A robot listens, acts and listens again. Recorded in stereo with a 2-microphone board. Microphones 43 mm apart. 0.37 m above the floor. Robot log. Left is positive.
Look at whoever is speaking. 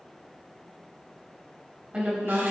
note: The woman speaking: about 30° right or 150° right.
cmd yaw -30
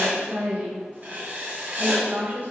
note: So it is at 115° right.
cmd yaw -115
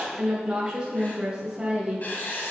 note: The woman speaking is now 25° right.
cmd yaw -25
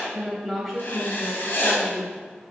end: Facing the woman speaking, 2 to 4 m away.